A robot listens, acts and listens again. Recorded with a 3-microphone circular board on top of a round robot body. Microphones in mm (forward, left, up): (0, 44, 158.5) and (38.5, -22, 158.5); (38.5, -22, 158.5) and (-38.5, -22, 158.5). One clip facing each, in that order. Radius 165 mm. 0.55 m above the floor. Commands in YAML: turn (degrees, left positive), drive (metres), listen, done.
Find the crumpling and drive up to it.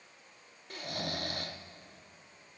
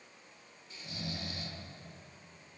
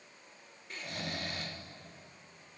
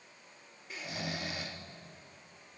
listen: true
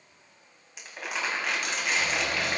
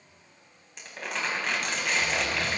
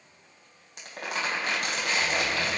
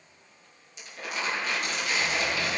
turn: 35
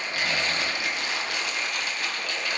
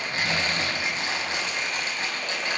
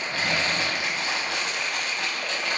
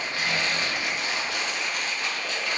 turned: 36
drive: 1.0
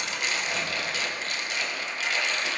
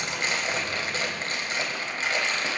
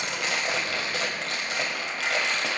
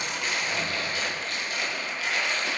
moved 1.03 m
drive: 1.0
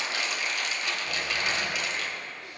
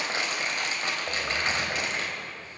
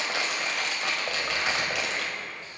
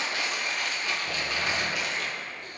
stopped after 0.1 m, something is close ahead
done: "Blocked. The crumpling is further on, straight ahead."